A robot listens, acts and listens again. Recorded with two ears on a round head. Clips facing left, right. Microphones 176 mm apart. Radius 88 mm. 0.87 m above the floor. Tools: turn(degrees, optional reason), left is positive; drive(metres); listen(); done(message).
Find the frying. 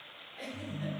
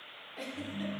listen()
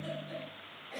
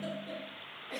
listen()
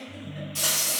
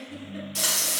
turn(degrees=-25, reason="The frying: about 25° right or 155° right.")
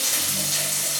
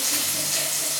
done("Found it: frying, straight ahead, 1 to 2 m away.")